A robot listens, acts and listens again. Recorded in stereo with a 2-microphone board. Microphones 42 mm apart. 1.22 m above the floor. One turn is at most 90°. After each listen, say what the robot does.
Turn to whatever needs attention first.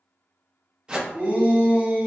Turn 60° right.
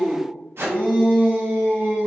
Turn 60° right.
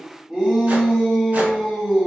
Facing the shout.